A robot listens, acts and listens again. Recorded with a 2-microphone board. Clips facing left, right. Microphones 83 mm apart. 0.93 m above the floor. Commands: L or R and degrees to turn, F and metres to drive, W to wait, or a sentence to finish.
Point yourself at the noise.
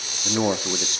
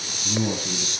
L65
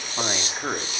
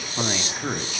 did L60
L20
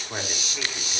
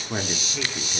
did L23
Facing the man speaking.